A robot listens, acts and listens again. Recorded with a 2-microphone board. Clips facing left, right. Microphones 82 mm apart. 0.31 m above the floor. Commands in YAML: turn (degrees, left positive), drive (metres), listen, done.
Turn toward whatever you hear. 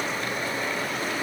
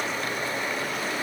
listen: true
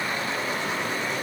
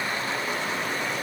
listen: true
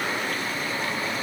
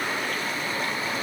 done: "I can't make out anything."